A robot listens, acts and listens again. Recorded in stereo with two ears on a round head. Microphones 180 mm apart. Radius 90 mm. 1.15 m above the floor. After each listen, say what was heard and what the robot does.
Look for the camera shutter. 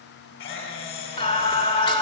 The camera shutter: about 55° left or 125° left. Turn 55° left.
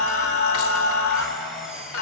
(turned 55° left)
Facing the camera shutter, 2 to 4 m away.